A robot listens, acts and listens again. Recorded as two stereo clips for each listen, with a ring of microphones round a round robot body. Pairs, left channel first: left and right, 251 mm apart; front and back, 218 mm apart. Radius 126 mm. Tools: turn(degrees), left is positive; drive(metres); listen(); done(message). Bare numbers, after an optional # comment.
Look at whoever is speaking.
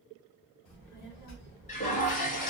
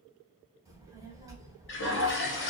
# The child speaking: 105° left.
turn(105)
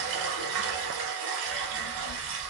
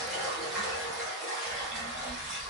# The child speaking is now 15° right.
turn(-15)
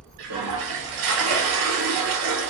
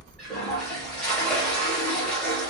# The child speaking is now 10° right.
turn(-10)
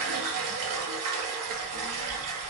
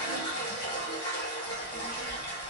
done("Found it: a child speaking, straight ahead.")